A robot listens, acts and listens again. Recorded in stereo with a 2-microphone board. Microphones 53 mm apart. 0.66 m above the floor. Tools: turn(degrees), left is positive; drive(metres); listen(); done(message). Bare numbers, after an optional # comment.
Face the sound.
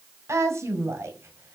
# The woman speaking: about 60° right or 120° right.
turn(-60)
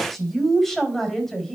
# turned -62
# So it is at 10° left.
turn(10)
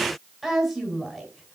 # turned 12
done("Facing the woman speaking, over 4 m away.")